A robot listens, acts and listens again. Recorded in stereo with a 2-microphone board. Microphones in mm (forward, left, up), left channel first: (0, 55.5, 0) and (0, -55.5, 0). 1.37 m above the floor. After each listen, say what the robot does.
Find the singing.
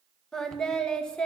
Turn 30° left.
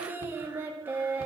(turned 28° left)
Turn 20° right.
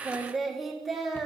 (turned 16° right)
Facing the singing.